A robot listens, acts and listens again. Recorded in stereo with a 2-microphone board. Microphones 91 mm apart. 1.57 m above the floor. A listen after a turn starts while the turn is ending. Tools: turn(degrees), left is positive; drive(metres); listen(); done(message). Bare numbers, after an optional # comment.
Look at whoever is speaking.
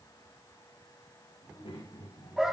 turn(90)
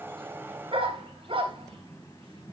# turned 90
done("Facing the child speaking.")